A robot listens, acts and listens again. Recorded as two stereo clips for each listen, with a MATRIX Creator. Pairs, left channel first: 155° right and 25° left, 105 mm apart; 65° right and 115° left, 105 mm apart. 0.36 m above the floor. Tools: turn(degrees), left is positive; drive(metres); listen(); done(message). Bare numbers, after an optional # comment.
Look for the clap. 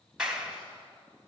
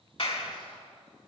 # The clap: 60° right.
turn(-60)
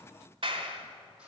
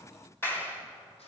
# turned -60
done("Facing the clap, 1 to 2 m away.")